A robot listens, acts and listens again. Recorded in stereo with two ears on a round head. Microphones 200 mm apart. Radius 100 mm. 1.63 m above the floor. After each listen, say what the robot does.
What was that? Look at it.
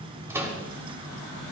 Turn 30° right.
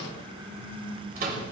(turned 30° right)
Turn 140° right.
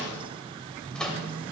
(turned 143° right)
Facing the microwave.